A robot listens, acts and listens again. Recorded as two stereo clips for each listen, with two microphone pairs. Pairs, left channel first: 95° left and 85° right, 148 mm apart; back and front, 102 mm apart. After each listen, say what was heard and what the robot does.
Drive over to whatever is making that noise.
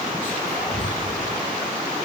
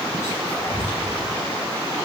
The whispering: 115° right. Turn 115° right.
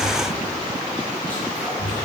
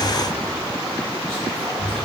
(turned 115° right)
The whispering is now 15° left. Turn 15° left.
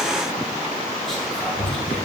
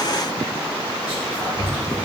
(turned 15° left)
Drive 1.0 m forward.
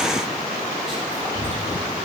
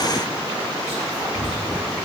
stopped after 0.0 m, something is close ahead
Something is in my way. I am facing the whispering but have not reached it.